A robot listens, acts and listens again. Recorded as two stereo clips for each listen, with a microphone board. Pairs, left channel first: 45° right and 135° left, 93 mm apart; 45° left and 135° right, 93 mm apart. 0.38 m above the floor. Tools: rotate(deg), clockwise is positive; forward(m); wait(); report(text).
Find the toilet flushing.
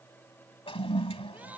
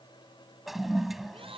rotate(50)
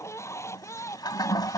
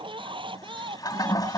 report("Found it: a toilet flushing, straight ahead.")